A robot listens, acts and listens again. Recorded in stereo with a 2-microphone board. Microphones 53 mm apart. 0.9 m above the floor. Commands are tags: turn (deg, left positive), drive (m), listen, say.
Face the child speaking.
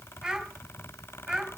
<turn deg="-30"/>
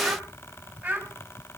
<turn deg="-155"/>
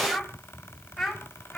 <say>Facing the child speaking.</say>